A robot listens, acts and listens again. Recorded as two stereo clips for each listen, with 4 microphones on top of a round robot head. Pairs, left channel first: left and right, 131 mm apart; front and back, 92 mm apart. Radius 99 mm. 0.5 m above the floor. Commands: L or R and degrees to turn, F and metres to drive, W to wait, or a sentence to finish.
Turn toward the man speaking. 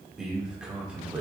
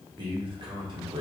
R165
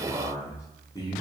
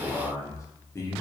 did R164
L45
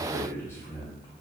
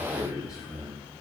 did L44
L35
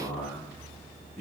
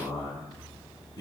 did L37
L20
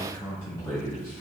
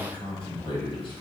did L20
Found it: a man speaking, straight ahead.